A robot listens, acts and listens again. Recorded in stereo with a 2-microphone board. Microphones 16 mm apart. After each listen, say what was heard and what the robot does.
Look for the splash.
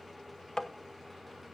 Keep listening.
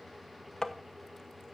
Keep listening.
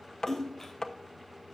The splash: about 25° left or 155° left. Turn 25° left.
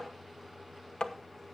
Keep listening.
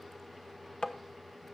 I heard a splash, but can't make it out now. It was about straight ahead or 130° left.